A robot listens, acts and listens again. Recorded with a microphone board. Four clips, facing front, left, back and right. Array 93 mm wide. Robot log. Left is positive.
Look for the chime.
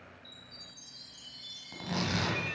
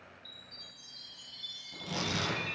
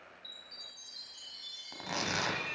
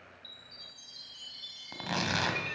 note: The chime: 65° right.
cmd yaw -65
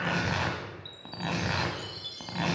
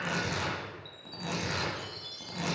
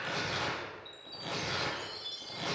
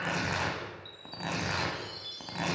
end: Facing the chime.